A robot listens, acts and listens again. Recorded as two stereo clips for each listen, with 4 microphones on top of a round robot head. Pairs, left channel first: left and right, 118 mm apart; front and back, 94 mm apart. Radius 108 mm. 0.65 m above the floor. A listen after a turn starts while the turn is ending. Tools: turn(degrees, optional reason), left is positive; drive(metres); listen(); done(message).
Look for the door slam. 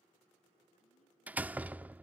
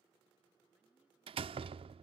turn(degrees=-165, reason="The door slam: 165° right.")
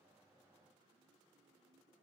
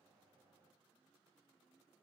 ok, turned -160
done("I heard a door slam from this way, but can't make it out now.")